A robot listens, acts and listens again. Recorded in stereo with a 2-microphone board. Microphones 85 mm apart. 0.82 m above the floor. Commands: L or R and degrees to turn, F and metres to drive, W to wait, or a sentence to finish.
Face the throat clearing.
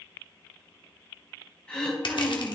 L30
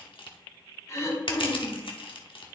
L140
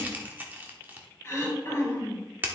L30
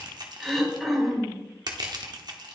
Found it: throat clearing, straight ahead, 2 to 4 m away.